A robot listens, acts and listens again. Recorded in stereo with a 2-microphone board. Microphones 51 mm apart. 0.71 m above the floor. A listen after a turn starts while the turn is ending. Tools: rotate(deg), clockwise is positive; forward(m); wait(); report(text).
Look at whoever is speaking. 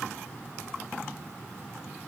wait()
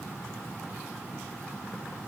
wait()
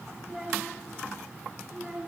rotate(-30)
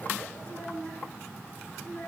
rotate(-140)
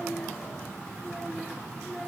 report("Found it: a child speaking, straight ahead.")